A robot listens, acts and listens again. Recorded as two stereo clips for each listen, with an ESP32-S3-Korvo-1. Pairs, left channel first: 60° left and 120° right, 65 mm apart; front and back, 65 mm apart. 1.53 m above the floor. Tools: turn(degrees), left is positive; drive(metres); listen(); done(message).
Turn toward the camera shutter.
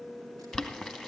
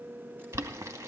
listen()
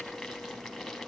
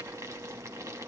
listen()
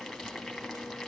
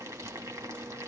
done("I can't make out a camera shutter to turn to.")